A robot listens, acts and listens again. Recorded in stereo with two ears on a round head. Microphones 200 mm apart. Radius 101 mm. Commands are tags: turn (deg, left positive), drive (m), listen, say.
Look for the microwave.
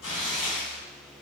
<listen/>
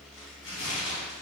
<listen/>
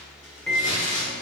<turn deg="30"/>
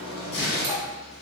<turn deg="-30"/>
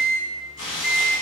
<say>Facing the microwave, under 1 m away.</say>